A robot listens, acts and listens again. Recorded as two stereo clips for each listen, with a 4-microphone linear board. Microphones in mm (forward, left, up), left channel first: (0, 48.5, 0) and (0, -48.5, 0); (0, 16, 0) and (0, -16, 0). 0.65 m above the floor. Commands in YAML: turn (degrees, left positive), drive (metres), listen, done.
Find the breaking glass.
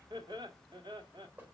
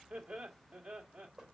listen: true
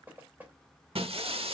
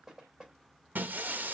turn: -90
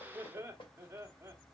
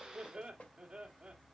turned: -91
done: "Facing where the breaking glass came from. I can't hear it now."